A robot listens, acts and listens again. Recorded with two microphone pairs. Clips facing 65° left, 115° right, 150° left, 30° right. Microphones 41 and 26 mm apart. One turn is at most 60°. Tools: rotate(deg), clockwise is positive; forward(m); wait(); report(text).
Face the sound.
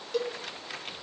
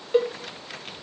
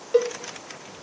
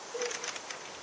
rotate(60)
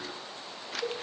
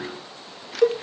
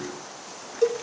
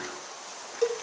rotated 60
rotate(60)
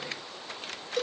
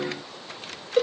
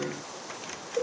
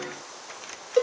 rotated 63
rotate(50)
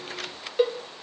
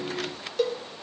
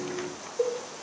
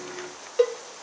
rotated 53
report("Found it: a cowbell, straight ahead, under 1 m away.")